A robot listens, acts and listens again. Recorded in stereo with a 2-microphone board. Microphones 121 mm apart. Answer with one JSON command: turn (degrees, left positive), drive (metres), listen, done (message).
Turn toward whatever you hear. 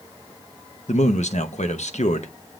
{"turn": 70}
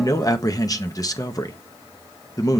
{"turn": 30}
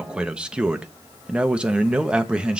{"turn": -10}
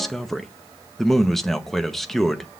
{"done": "Found it: a man speaking, straight ahead, under 1 m away."}